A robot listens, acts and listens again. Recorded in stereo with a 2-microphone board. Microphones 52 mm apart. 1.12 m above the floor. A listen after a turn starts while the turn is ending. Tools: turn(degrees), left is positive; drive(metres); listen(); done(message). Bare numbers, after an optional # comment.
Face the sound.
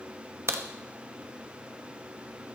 # The crack: about 60° right or 120° right.
turn(-60)
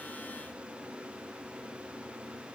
listen()
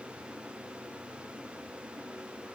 done("I heard a crack, but can't make it out now. It was about straight ahead or 60° right.")